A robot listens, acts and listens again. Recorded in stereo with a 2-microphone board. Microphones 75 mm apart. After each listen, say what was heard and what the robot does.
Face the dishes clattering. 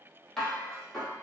Turn 30° left.
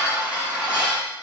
So it is at 20° right. Turn 20° right.
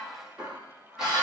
The dishes clattering is now 10° right. Turn 10° right.
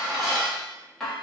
Facing the dishes clattering.